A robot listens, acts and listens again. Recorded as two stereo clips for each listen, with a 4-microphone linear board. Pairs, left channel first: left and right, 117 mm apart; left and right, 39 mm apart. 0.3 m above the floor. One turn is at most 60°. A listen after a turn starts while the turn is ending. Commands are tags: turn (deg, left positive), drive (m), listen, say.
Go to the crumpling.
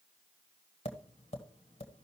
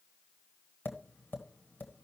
<listen/>
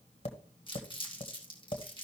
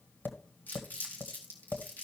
<turn deg="45"/>
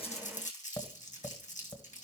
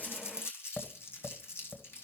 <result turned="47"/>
<turn deg="60"/>
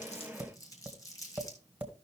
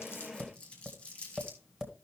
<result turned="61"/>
<turn deg="30"/>
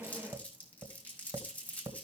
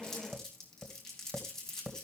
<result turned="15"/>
<turn deg="10"/>
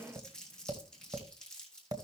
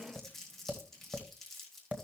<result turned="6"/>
<drive m="1.0"/>
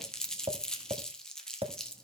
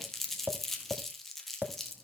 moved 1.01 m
<drive m="1.0"/>
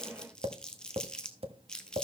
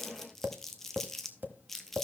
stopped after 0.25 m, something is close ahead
<say>Arrived at the crumpling, straight ahead.</say>